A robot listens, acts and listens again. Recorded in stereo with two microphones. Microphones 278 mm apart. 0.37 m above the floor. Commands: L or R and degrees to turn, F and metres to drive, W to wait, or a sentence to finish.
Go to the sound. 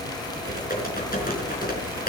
L30
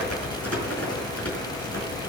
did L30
L115
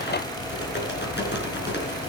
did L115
L40
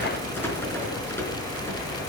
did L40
L10
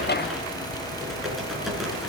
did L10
F1.0
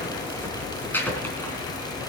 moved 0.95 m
L10
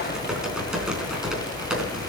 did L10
F1.0
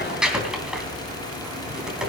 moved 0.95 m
F1.0
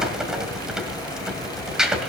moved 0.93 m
F1.0
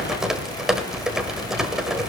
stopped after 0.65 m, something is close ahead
Arrived at the typing on a keyboard, straight ahead.